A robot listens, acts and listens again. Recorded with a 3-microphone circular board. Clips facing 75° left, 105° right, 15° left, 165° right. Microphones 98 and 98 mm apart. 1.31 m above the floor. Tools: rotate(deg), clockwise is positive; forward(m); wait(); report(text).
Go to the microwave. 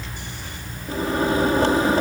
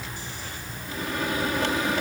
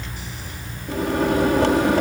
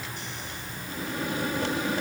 rotate(-20)
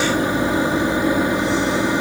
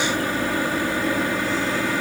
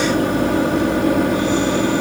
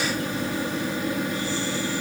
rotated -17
forward(1.0)
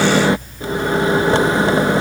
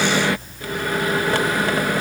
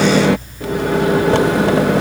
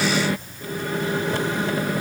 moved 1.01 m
rotate(-10)
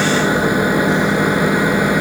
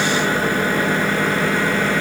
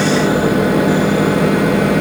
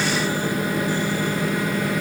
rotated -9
forward(1.0)
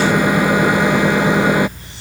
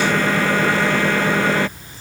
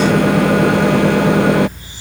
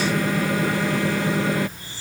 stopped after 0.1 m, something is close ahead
report("I am next to the microwave.")